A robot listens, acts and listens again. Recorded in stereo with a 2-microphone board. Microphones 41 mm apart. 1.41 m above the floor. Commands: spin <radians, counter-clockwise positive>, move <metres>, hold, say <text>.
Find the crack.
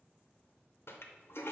hold
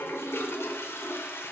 hold
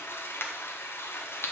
spin 1.05
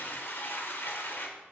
hold
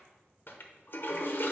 say I heard a crack, but can't make it out now. It was about straight ahead or 60° left.